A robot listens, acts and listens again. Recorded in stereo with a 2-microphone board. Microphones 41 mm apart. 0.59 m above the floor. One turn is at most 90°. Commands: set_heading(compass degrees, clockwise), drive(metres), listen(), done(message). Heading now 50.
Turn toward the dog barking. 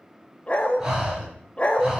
set_heading(20)
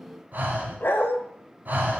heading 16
set_heading(286)
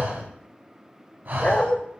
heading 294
set_heading(259)
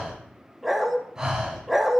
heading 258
done("Facing the dog barking, under 1 m away.")